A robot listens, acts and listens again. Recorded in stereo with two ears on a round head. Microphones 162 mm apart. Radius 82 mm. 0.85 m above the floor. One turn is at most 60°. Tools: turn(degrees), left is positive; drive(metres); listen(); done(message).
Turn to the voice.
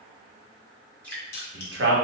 turn(degrees=-60)
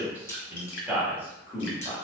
turn(degrees=-10)
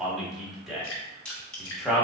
done("Found it: a man speaking, straight ahead.")